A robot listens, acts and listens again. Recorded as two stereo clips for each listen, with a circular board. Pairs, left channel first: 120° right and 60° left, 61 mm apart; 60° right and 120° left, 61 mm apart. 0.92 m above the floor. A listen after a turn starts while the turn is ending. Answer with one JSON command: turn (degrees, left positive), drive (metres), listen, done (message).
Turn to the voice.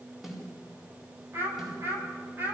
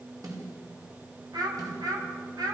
{"turn": 115}
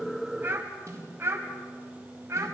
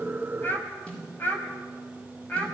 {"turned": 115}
{"turn": 10}
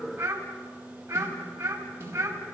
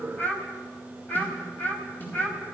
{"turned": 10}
{"done": "Facing the child speaking."}